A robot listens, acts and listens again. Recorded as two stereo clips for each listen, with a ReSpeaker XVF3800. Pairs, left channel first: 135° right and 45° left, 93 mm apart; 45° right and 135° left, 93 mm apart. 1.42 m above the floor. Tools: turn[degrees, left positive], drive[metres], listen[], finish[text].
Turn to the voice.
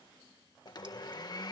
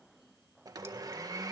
Action: listen[]
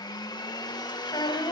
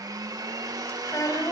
Thought: The child speaking: 100° right.
Action: turn[-100]
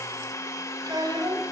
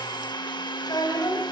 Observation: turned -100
Action: finish[Found it: a child speaking, straight ahead, over 4 m away.]